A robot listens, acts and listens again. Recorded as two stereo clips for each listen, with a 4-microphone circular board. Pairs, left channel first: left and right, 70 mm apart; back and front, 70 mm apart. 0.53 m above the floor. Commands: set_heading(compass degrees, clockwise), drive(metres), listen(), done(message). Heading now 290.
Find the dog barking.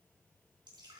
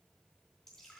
listen()
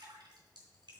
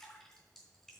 listen()
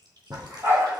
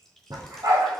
set_heading(320)
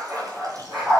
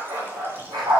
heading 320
done("Found it: a dog barking, straight ahead, over 4 m away.")